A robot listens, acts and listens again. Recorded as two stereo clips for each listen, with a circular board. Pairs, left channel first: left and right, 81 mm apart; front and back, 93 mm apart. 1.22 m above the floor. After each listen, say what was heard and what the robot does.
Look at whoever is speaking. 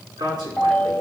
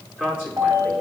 The man speaking: 110° right. Turn 110° right.
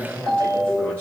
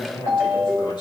The man speaking is now 30° right. Turn 30° right.
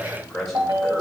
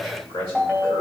Facing the man speaking.